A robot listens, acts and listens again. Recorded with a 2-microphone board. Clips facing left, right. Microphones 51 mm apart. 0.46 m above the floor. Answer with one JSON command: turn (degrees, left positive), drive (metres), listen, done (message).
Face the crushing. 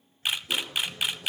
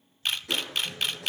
{"turn": -90}
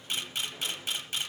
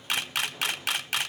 {"done": "Facing the crushing, 2 to 4 m away."}